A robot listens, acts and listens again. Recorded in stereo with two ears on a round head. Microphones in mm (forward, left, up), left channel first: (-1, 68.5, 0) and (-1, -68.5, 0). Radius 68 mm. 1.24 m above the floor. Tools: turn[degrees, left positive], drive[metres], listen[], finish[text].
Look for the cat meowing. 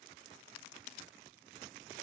Action: listen[]
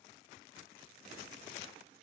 Action: listen[]
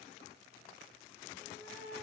Thought: The cat meowing: about 50° left or 130° left.
Action: turn[50]
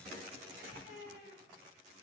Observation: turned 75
Thought: So it is at 50° left.
Action: turn[50]
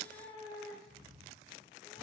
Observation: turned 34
Thought: The cat meowing is now 15° left.
Action: turn[15]
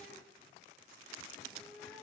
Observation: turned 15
Action: finish[Found it: a cat meowing, straight ahead.]